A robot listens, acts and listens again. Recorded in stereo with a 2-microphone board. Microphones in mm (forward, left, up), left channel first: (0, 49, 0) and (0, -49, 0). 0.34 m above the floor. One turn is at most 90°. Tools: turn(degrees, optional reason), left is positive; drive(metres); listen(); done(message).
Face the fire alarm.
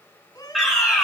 turn(degrees=30)
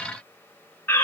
turn(degrees=90, reason="So it is at 150° left.")
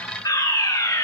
turn(degrees=50, reason="The fire alarm is now 50° left.")
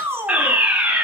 turn(degrees=-15, reason="The fire alarm is now 15° right.")
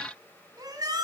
listen()
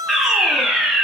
done("Found it: a fire alarm, straight ahead, 2 to 4 m away.")